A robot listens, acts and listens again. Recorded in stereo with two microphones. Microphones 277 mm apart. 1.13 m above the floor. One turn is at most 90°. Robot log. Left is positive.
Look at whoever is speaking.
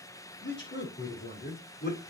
note: The man speaking: about 35° left or 145° left.
cmd yaw +35
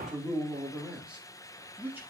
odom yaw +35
end: Facing the man speaking.